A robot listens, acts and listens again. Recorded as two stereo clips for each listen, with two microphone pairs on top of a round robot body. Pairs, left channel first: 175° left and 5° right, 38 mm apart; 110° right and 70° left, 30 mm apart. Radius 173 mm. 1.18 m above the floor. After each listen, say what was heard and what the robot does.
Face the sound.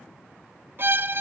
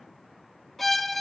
The violin: 30° right. Turn 30° right.
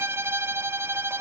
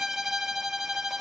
The violin is now 10° right. Turn 10° right.
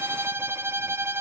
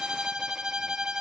Facing the violin.